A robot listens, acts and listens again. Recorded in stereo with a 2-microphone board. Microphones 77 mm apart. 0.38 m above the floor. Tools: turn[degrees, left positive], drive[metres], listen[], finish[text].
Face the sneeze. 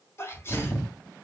Thought: The sneeze: about 35° left or 145° left.
Action: turn[35]
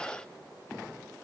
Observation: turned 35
Action: listen[]
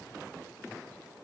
Action: finish[I heard a sneeze, but can't make it out now. It was about straight ahead or 110° left.]